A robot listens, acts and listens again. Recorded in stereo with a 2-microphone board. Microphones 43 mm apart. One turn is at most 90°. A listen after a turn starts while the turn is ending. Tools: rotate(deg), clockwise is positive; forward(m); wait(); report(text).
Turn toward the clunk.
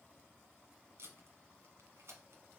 wait()
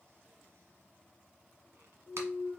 rotate(40)
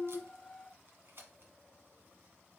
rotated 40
wait()
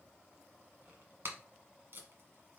report("I heard a clunk, but can't make it out now. It was about straight ahead or 100° right.")